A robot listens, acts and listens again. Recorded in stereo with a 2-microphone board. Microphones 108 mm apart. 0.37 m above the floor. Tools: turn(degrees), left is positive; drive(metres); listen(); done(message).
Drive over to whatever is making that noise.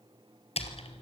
turn(degrees=90)
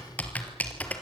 turn(degrees=15)
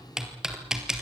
drive(metres=1.0)
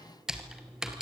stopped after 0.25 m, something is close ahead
done("Something is in my way. I am facing the typing on a keyboard but have not reached it.")